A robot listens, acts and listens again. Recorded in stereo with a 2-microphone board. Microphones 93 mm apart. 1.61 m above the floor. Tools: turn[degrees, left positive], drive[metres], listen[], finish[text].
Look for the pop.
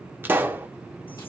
Thought: The pop: about 25° right or 155° right.
Action: turn[-25]
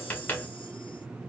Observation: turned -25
Action: listen[]
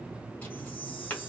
Action: finish[I heard a pop, but can't make it out now. It was about straight ahead or 130° right.]